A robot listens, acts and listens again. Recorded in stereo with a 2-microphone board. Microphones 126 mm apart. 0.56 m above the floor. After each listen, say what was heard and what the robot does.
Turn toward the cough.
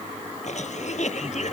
The cough: about 65° left or 115° left. Turn 65° left.
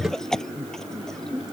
Found it: a cough, straight ahead.